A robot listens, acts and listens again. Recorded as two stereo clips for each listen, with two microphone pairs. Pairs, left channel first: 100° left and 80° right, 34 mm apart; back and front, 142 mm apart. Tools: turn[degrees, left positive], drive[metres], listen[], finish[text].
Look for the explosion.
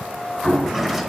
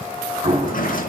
Thought: The explosion: 25° left.
Action: turn[25]
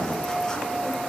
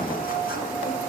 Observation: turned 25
Action: finish[Facing where the explosion came from. I can't hear it now.]